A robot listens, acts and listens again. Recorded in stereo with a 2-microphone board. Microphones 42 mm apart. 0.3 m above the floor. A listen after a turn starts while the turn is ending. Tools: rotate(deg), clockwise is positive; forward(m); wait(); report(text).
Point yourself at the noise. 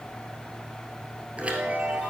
rotate(30)
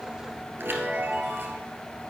rotate(120)
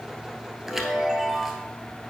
rotate(10)
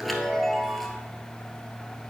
report("Found it: a chime, straight ahead, 1 to 2 m away.")